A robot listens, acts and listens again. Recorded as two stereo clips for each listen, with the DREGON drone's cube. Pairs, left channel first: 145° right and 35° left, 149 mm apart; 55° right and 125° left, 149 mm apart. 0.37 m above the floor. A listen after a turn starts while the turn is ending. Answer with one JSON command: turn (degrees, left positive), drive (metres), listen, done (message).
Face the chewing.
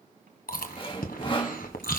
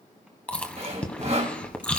{"turn": -140}
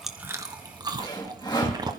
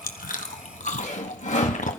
{"turn": -25}
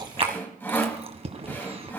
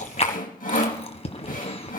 {"turn": -10}
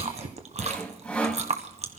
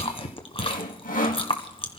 {"done": "Found it: chewing, straight ahead."}